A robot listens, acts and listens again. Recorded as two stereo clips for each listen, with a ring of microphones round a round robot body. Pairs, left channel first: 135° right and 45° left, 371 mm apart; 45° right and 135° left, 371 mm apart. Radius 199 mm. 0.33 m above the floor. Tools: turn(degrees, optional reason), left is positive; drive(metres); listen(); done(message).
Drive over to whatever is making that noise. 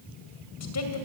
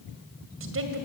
turn(degrees=-175, reason="The woman speaking: 175° right.")
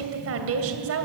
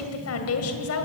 drive(metres=1.0)
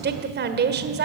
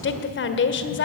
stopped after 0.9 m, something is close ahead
done("Arrived at the woman speaking, straight ahead.")